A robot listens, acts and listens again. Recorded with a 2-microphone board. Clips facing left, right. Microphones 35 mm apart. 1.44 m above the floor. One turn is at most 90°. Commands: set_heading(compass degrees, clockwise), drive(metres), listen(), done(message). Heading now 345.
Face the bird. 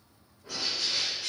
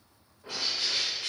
set_heading(25)
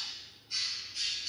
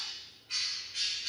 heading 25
set_heading(115)
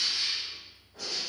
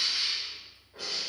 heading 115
set_heading(145)
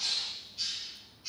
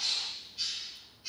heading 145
done("Facing the bird.")